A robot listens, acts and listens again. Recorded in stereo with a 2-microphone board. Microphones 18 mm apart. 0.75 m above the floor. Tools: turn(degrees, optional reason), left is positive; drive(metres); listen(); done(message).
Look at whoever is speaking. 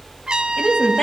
turn(degrees=45, reason="The woman speaking: about 45° left or 135° left.")
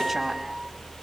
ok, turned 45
listen()
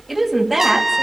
done("Facing the woman speaking.")